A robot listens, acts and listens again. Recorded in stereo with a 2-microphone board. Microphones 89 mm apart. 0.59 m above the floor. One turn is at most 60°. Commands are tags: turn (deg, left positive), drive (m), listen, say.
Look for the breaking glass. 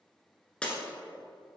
<turn deg="30"/>
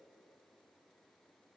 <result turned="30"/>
<listen/>
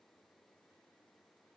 <say>I heard breaking glass, but can't make it out now. It was about 20° right or 140° left.</say>